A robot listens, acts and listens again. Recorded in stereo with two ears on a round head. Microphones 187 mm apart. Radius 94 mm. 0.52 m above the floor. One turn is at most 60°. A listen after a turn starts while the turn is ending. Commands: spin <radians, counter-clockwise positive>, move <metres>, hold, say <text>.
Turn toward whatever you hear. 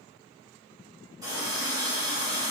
spin -0.35
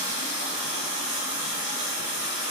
spin -1.05
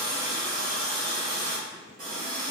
spin -0.79
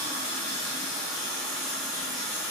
say Facing the running tap, 1 to 2 m away.